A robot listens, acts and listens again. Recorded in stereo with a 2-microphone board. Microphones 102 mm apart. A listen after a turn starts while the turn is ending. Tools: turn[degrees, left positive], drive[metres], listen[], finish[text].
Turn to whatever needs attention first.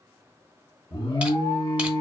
Thought: The alarm: about 55° left or 125° left.
Action: turn[55]
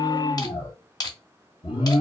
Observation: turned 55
Thought: So it is at 70° left.
Action: turn[70]
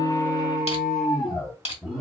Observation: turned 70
Action: finish[Facing the alarm.]